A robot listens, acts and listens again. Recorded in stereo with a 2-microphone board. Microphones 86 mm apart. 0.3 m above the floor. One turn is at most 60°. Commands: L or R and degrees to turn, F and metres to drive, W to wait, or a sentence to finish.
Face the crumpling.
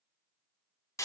W
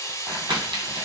R60
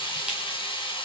W
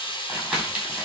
Found it: crumpling, straight ahead, 1 to 2 m away.